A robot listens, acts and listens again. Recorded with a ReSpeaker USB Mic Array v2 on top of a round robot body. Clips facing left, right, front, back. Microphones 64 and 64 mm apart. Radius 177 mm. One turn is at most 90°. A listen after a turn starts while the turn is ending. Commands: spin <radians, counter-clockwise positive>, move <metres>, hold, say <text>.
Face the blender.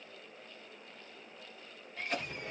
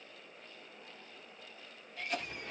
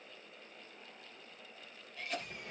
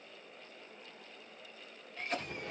hold
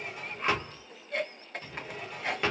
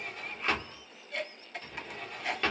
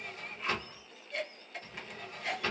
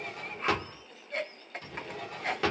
hold
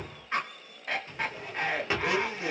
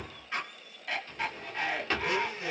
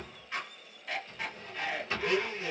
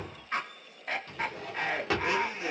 spin 1.57
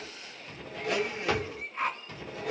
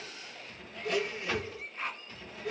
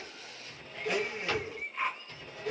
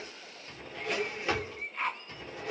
spin 0.87
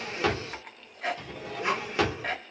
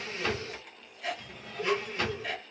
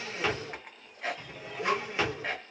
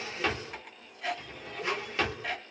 spin 0.35
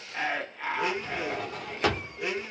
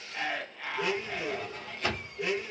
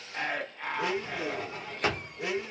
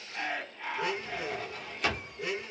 say Facing the blender.